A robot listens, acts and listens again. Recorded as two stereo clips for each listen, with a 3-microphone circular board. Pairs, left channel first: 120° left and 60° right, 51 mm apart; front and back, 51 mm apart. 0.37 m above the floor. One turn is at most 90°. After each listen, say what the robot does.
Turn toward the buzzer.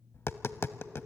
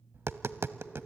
Keep listening.
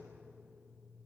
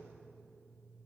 Keep listening.
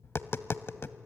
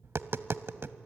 I can't make out a buzzer to turn to.